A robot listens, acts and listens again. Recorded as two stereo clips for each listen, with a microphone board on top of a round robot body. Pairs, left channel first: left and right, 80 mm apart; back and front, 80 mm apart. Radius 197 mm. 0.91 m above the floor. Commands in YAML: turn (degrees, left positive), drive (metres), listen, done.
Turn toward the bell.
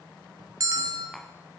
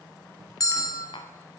turn: -135
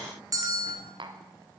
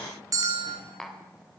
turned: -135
turn: -45
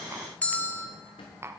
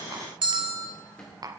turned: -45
turn: 15
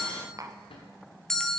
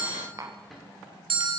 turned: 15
done: "Facing the bell."